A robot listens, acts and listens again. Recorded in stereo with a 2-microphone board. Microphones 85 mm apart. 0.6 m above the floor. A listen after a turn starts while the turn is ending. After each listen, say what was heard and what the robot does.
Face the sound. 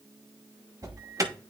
The alarm: about 40° right or 140° right. Turn 40° right.
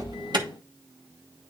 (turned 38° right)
Keep listening.
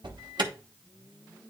So it is at 95° right. Turn 95° right.
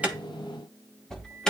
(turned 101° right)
The alarm is now 10° left. Turn 10° left.
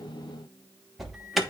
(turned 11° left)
Facing the alarm, 1 to 2 m away.